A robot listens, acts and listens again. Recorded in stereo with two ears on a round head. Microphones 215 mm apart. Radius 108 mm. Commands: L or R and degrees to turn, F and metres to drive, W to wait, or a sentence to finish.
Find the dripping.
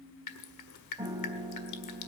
L90
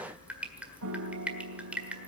Facing the dripping.